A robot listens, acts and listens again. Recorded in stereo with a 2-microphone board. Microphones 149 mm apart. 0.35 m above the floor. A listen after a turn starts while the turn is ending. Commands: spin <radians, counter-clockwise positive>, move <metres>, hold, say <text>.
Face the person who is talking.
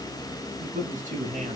spin -1.05
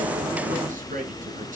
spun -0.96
spin -1.13
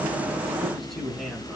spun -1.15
say Facing the man speaking, over 4 m away.